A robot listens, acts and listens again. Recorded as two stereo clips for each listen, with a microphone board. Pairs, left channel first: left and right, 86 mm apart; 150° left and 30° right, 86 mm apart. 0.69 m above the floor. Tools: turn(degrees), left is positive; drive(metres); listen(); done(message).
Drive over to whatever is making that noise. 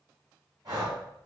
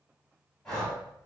turn(degrees=-130)
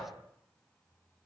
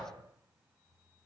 listen()
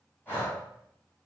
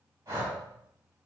turn(degrees=25)
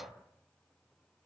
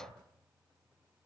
listen()
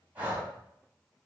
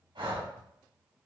turn(degrees=-20)
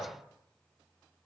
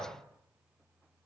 listen()
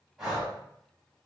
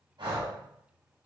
drive(metres=1.0)
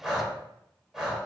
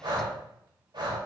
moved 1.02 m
drive(metres=1.0)
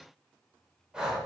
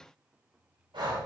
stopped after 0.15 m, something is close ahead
turn(degrees=-10)
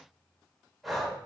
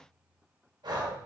done("Arrived at the breathing, straight ahead.")